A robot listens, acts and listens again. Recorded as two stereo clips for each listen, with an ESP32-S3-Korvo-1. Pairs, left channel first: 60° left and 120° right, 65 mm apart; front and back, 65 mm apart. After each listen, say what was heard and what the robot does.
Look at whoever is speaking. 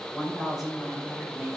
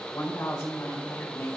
The woman speaking: 45° right. Turn 45° right.
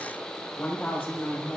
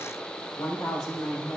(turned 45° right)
The woman speaking is now 10° right. Turn 10° right.
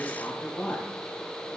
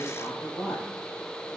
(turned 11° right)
Facing the woman speaking, 2 to 4 m away.